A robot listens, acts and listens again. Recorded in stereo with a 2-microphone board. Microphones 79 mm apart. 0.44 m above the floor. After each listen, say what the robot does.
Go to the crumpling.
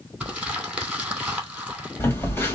Turn 30° right.
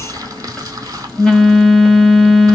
Keep listening.
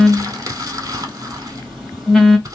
Turn 140° right.
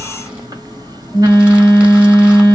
Keep listening.
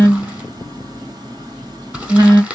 Turn 20° right.
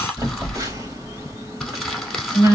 Drive 1.0 m forward.
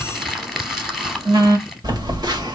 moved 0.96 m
Drive 1.0 m forward.
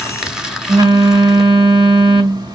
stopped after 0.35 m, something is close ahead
Keep listening.
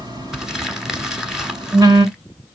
Arrived at the crumpling, straight ahead.